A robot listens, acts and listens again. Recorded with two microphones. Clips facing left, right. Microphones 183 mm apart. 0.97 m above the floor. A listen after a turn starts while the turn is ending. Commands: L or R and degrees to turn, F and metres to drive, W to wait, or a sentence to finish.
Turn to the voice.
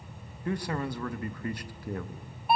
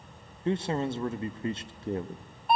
R25
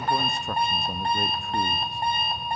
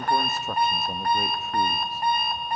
Facing the man speaking.